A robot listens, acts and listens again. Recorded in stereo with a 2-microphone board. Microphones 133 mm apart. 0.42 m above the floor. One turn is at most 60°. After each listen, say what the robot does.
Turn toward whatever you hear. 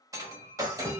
Turn 25° right.
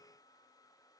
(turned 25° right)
Keep listening.
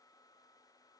I heard breaking glass, but can't make it out now. It was about straight ahead or 130° right.